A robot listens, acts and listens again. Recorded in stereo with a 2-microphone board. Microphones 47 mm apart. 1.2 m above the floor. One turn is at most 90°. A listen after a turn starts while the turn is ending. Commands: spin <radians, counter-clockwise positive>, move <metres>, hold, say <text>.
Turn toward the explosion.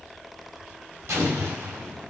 spin -1.57
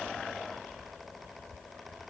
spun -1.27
spin -0.26
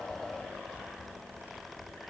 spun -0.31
say I heard an explosion from this way, but can't make it out now.